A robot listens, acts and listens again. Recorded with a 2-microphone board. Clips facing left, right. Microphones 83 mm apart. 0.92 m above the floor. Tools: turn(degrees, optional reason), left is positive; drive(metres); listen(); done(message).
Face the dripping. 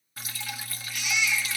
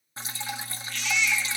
turn(degrees=-30, reason="The dripping: about 30° right or 150° right.")
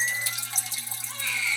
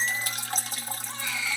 turn(degrees=-120, reason="So it is at 120° right.")
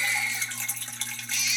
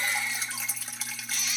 done("Facing the dripping.")